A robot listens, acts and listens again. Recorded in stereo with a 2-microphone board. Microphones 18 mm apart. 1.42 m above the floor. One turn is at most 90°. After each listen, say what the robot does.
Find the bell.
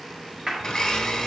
Keep listening.
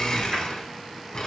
Keep listening.
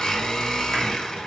I can't make out a bell to turn to.